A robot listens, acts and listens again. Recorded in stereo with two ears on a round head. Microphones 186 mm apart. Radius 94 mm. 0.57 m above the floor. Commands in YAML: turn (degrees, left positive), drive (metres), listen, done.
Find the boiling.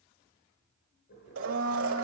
turn: 65
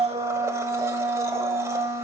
listen: true
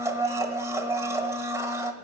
listen: true
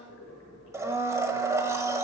turn: 50
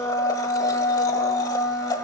listen: true
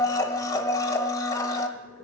turn: 20
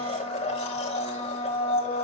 listen: true
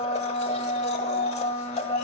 listen: true
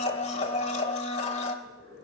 done: "Found it: boiling, straight ahead, over 4 m away."